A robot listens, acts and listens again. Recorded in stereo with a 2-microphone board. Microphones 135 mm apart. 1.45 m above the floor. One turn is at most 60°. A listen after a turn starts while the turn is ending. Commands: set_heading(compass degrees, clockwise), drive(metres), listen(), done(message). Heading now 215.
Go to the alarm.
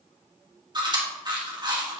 listen()
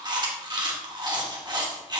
listen()
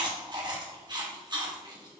done("I can't make out an alarm, only chewing.")